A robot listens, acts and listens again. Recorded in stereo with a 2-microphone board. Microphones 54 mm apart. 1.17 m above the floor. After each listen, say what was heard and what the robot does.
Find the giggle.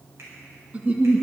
The giggle: about 25° right or 155° right. Turn 25° right.
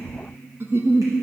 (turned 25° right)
So it is at 130° right. Turn 130° right.
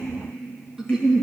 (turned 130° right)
The giggle is now 10° right. Turn 10° right.
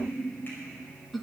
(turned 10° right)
Found it: a giggle, straight ahead, 1 to 2 m away.